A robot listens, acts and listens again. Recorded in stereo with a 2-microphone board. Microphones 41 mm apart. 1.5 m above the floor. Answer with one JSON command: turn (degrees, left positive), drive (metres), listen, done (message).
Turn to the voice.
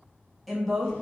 {"turn": 30}
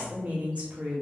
{"turn": -30}
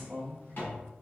{"done": "Facing the woman speaking, 1 to 2 m away."}